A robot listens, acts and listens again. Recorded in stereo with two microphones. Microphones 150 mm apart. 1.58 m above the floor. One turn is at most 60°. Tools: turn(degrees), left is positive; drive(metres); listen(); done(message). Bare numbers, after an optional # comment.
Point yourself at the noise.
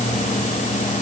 listen()
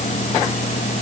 listen()
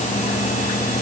done("I can't make out anything to turn to.")